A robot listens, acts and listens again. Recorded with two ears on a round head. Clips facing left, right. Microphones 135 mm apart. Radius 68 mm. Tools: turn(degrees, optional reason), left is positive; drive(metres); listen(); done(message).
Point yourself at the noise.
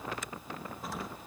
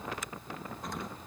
turn(degrees=30)
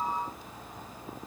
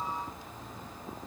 listen()
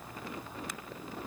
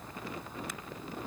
done("I heard an explosion, but can't make it out now. It was about 25° right or 145° left.")